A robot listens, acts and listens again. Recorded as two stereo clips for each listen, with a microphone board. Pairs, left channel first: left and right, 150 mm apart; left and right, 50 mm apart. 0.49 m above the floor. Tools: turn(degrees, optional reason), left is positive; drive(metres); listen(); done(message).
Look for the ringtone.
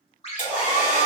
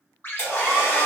turn(degrees=45, reason="The ringtone: about 45° left or 135° left.")
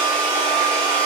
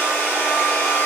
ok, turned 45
listen()
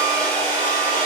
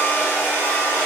listen()
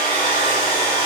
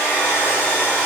done("I heard a ringtone, but can't make it out now. It was about straight ahead or 90° left.")